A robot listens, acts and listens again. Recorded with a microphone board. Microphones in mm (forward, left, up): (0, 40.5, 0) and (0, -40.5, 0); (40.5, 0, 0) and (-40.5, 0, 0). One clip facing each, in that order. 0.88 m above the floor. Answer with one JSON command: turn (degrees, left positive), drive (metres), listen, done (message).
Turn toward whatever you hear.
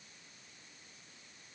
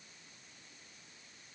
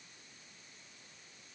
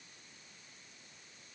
{"listen": true}
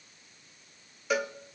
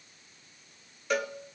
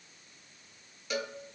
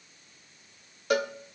{"turn": 175}
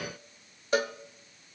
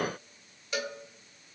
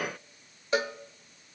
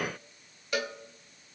{"turn": 55}
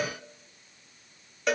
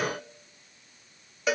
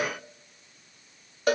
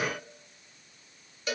{"done": "Found it: a cowbell, straight ahead."}